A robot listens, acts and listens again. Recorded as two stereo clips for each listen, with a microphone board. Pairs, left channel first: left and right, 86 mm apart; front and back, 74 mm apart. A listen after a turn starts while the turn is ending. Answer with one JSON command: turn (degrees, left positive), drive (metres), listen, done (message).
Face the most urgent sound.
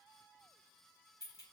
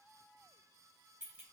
{"listen": true}
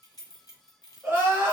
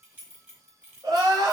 {"turn": -155}
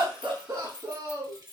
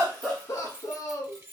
{"turn": -40}
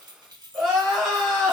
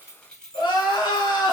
{"done": "Found it: crying, straight ahead."}